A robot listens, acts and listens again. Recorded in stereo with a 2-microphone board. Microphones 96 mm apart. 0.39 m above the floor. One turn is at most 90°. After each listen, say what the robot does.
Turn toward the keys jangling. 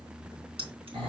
Keep listening.
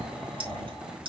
Turn 65° right.
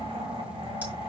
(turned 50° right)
Keep listening.
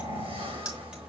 Turn 10° right.
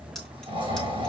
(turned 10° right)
Keep listening.
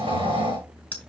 Turn 15° left.
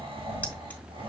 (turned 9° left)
Turn 10° left.
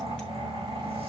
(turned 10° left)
Keep listening.
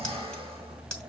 I heard keys jangling from this way, but can't make it out now.